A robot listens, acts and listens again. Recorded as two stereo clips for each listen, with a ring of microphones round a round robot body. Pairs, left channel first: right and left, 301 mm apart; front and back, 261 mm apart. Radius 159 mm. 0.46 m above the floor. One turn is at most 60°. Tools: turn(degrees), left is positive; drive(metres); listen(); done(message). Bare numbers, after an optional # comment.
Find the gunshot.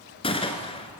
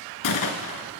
# The gunshot: 15° right.
turn(-15)
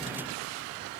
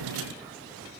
done("Facing where the gunshot came from. I can't hear it now.")